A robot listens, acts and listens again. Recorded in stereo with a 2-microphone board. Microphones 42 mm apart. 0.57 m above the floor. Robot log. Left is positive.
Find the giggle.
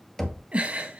note: The giggle: about 35° right or 145° right.
cmd yaw -35
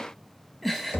end: Found it: a giggle, straight ahead, 1 to 2 m away.